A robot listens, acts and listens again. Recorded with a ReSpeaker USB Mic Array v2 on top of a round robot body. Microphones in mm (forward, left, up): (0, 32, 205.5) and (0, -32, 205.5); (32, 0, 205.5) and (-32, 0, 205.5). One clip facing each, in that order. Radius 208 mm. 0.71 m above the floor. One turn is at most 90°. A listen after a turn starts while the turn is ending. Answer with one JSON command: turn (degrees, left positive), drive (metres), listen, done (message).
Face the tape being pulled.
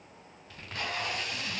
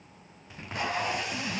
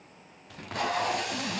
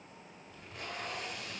{"turn": -15}
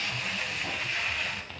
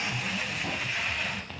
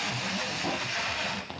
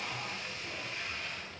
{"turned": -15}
{"done": "Found it: tape being pulled, straight ahead, 1 to 2 m away."}